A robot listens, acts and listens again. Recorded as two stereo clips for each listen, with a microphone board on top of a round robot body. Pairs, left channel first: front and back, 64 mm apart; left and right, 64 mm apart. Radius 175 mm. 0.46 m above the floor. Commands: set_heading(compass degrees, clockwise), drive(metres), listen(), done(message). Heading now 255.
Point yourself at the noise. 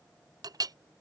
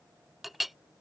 set_heading(70)
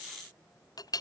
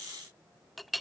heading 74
done("Found it: a clink, straight ahead.")